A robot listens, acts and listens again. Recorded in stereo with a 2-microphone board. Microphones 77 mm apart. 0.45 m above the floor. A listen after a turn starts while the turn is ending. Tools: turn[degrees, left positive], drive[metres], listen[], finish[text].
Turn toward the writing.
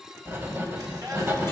Thought: The writing: about 30° right or 150° right.
Action: turn[-30]
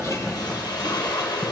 Action: finish[Found it: writing, straight ahead, 2 to 4 m away.]